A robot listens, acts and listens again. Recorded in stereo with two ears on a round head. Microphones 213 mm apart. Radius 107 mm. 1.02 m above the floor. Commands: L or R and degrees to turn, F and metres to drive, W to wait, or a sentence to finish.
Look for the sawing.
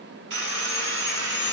R50
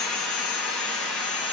Found it: sawing, straight ahead.